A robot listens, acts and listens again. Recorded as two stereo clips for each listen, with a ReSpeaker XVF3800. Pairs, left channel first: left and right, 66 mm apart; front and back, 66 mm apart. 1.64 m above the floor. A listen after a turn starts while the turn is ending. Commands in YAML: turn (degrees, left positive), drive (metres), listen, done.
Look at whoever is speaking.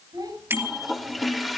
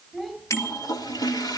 turn: -80
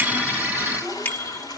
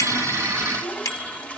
listen: true
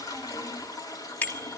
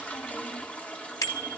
listen: true
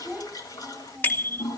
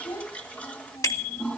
turn: -15
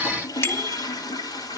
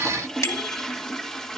listen: true
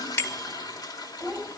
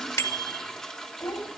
done: "Found it: a child speaking, straight ahead."